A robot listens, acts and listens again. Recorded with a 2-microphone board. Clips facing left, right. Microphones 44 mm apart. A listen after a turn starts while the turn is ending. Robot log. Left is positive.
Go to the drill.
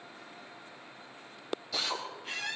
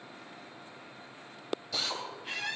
cmd yaw +30
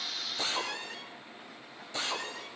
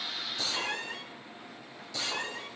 note: So it is at 145° left.
cmd yaw +145
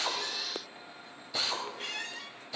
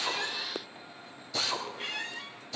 note: The drill is now 10° left.
cmd yaw +10
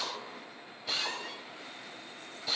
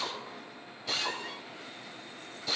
cmd fwd 1.0
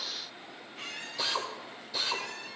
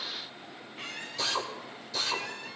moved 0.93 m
note: The drill is now 10° left.
cmd yaw +10
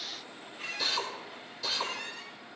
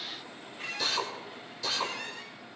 cmd fwd 1.0
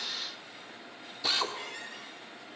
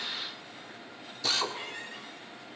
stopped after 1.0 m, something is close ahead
note: The drill is now 10° left.
cmd yaw +10
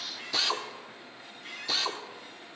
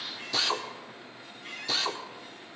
end: Arrived at the drill, straight ahead.